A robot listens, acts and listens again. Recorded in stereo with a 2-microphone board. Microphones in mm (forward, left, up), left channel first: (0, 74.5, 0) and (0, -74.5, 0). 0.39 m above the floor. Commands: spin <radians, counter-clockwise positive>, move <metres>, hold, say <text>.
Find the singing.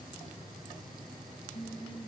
spin 1.13
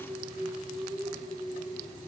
say Facing the singing.